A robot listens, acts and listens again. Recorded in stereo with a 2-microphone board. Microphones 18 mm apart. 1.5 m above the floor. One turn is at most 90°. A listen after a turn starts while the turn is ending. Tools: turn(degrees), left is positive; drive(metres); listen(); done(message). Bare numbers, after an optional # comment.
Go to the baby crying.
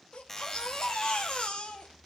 # The baby crying: about 70° left or 110° left.
turn(70)
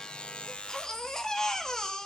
# So it is at 30° left.
turn(30)
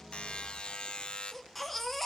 drive(1.0)
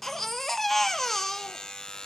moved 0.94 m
# The baby crying is now 10° left.
turn(10)
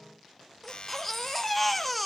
drive(1.0)
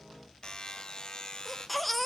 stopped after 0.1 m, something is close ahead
done("Arrived at the baby crying, straight ahead.")